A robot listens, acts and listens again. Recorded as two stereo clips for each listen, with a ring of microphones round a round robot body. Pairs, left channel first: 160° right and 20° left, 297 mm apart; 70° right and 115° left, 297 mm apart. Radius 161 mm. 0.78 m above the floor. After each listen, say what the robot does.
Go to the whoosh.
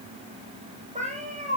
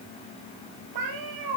Keep listening.
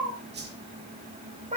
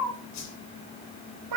Turn 35° right.
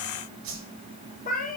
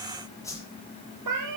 Turn 15° left.
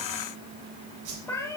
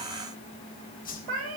Drive 1.0 m forward.
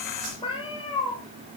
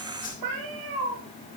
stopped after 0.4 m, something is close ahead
Something is in my way. I am facing the whoosh but have not reached it.